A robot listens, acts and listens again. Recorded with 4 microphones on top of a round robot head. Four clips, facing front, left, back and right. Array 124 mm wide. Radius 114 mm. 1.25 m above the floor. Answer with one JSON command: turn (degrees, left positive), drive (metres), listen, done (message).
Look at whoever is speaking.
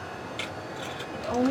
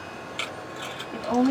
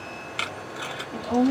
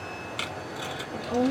{"turn": 105}
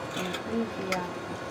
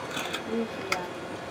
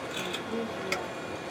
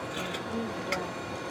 {"done": "Facing the woman speaking."}